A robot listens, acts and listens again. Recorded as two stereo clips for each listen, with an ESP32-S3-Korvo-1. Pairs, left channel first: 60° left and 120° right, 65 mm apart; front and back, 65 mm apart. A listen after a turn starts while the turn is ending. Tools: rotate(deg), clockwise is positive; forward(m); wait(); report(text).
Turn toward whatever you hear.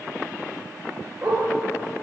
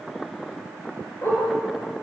rotate(45)
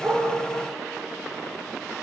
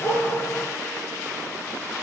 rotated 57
rotate(-10)
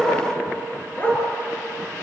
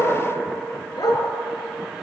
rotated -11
report("Facing the dog barking.")